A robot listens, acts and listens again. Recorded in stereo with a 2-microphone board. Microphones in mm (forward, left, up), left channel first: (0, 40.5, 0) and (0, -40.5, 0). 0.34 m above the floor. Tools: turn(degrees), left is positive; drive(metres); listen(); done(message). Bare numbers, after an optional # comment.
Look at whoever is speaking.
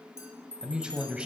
turn(-30)
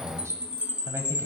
# So it is at 135° right.
turn(-135)
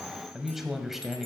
done("Found it: a man speaking, straight ahead.")